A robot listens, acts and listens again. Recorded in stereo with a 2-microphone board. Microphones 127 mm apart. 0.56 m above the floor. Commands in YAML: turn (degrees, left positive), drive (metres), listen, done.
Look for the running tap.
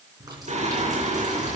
turn: -30
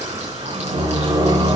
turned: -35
listen: true
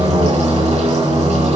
listen: true
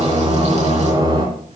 turn: -115
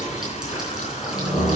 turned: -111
listen: true
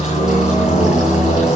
listen: true
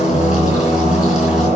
done: "Facing where the running tap came from. I can't hear it now."